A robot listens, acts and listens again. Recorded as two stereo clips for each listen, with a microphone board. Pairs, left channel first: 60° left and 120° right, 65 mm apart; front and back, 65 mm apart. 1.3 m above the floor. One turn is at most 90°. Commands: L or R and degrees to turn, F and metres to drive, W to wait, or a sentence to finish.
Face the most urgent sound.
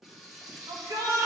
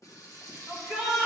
R90
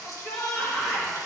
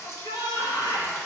R20
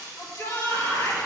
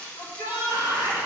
Facing the shout, 1 to 2 m away.